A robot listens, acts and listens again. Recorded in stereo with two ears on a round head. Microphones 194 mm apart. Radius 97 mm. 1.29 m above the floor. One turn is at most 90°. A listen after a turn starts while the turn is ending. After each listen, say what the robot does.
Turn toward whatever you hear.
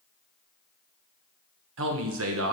Turn 70° right.
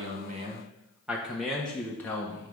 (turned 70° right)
Turn 15° left.
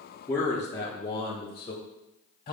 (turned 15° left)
Turn 25° left.
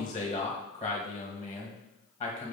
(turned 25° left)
Turn 15° left.
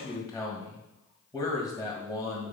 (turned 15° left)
Facing the man speaking, 1 to 2 m away.